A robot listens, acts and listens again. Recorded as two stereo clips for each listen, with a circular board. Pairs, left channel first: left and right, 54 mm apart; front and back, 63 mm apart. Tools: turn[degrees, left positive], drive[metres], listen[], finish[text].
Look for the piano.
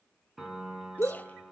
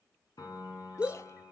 Action: finish[Found it: a piano, straight ahead, over 4 m away.]